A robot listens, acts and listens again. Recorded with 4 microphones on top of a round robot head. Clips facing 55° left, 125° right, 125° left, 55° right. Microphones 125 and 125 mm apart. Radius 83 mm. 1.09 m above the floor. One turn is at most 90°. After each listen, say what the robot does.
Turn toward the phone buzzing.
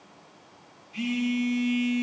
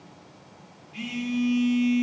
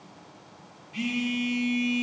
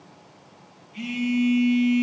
Turn 90° left.
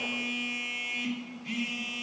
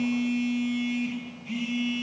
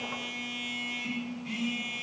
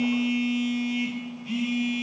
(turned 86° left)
Turn 30° left.
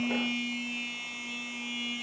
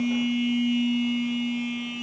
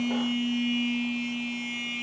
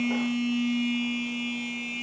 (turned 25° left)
Found it: a phone buzzing, straight ahead.